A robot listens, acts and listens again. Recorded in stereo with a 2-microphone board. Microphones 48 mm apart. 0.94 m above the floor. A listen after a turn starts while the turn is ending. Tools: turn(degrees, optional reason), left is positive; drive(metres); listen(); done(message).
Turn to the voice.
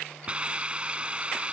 listen()
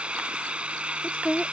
turn(degrees=25, reason="The woman speaking: about 25° left or 155° left.")
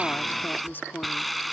turn(degrees=130, reason="So it is at 130° left.")
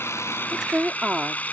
turn(degrees=-15, reason="The woman speaking is now 15° right.")
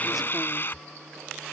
listen()
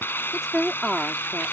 done("Found it: a woman speaking, straight ahead.")